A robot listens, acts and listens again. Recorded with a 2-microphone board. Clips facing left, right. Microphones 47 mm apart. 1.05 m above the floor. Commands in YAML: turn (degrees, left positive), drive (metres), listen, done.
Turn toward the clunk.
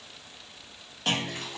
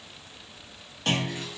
turn: 30
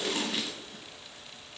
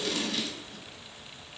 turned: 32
listen: true
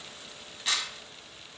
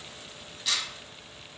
done: "I heard a clunk, but can't make it out now. It was about 25° right or 140° left."